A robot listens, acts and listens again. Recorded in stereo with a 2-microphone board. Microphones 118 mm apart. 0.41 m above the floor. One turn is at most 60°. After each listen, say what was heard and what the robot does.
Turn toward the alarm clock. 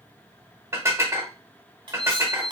The alarm clock: about 60° left or 120° left. Turn 60° left.
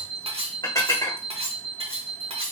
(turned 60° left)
So it is at 60° left. Turn 60° left.
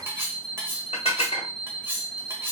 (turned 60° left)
The alarm clock is now 10° left. Turn 10° left.
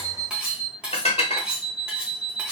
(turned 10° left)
Found it: an alarm clock, straight ahead.